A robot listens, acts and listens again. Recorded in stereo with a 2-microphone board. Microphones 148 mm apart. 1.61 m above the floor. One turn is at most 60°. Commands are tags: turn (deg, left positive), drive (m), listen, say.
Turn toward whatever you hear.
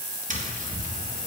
<turn deg="-60"/>
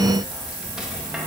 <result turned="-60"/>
<listen/>
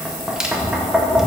<say>Facing the tapping.</say>